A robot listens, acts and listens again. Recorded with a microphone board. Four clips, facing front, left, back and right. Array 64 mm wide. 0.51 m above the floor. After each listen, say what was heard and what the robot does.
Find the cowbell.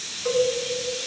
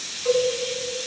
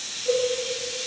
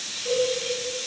The cowbell: 30° left. Turn 30° left.
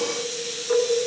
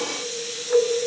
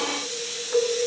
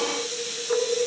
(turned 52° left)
The cowbell is now 25° right. Turn 25° right.
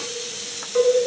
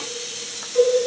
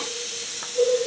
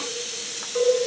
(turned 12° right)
The cowbell is now 10° right. Turn 10° right.
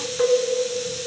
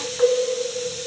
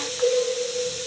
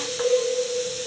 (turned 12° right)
Found it: a cowbell, straight ahead, over 4 m away.